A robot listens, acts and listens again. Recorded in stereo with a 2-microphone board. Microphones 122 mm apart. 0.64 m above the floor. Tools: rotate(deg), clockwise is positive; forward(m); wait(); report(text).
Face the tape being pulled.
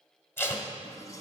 rotate(-20)
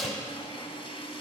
report("Found it: tape being pulled, straight ahead.")